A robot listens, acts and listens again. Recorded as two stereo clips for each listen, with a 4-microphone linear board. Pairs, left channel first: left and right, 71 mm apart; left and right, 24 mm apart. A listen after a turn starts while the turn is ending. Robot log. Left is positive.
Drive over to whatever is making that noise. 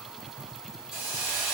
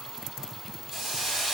cmd yaw -30
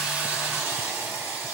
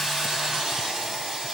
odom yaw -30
note: So it is at 135° right.
cmd yaw -135
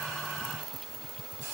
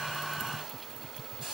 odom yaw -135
cmd idle
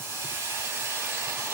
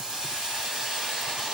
note: The hiss is now 40° right.
cmd yaw -40
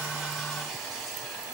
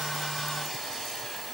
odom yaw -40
cmd fwd 1.0
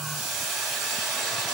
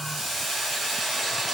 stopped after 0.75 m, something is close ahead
end: Arrived at the hiss, straight ahead.